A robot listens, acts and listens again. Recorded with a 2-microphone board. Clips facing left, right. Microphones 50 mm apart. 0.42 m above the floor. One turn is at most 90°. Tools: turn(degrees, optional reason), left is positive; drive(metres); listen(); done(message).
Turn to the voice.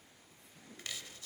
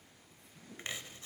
listen()
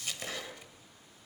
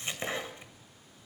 listen()
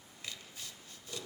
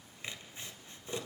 done("I can't make out anyone speaking to turn to.")